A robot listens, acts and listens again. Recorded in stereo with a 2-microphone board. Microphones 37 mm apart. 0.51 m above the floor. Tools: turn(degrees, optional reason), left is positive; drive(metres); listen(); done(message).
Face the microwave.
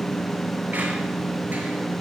listen()
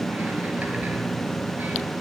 listen()
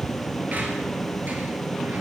done("I can't make out a microwave.")